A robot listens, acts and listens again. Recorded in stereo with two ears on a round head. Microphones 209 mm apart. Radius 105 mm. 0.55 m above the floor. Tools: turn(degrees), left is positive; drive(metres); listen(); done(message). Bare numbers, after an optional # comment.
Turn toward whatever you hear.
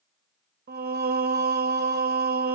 # The singing: about 45° right or 135° right.
turn(-45)
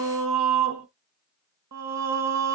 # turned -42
# So it is at 90° right.
turn(-90)
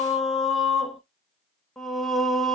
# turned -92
done("Facing the singing, 1 to 2 m away.")